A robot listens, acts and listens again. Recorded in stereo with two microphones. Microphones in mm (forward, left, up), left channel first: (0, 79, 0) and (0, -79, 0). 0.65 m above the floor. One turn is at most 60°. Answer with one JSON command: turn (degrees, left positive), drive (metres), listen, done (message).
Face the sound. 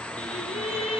{"turn": 40}
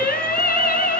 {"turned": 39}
{"turn": 60}
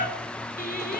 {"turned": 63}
{"turn": 60}
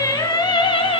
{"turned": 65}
{"turn": 35}
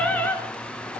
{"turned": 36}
{"turn": 10}
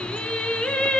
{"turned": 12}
{"done": "Found it: singing, straight ahead."}